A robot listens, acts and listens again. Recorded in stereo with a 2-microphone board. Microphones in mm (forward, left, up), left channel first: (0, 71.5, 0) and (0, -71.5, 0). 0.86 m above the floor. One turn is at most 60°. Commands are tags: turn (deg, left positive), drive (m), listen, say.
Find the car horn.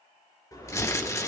<turn deg="25"/>
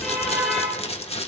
<say>Found it: a car horn, straight ahead.</say>